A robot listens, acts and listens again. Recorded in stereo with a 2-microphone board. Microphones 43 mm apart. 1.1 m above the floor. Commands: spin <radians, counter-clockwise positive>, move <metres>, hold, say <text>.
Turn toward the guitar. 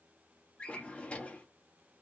hold
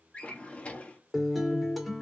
spin 0.52
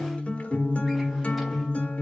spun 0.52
spin 2.62
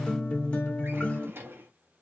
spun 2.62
spin 0.52
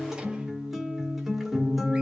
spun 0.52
say Found it: a guitar, straight ahead, 1 to 2 m away.